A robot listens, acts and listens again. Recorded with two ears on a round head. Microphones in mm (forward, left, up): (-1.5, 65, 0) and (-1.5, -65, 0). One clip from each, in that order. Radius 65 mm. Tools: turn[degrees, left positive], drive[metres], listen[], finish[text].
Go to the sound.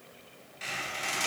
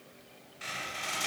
Action: turn[30]
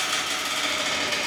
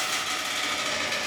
Thought: So it is at 35° right.
Action: turn[-35]
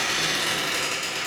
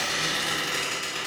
Thought: The squeak is now 10° right.
Action: turn[-10]
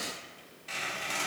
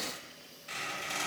Action: drive[1.0]
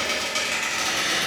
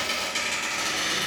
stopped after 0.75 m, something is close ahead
Thought: The squeak is now 15° right.
Action: turn[-15]
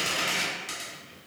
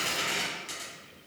Action: finish[I am next to the squeak.]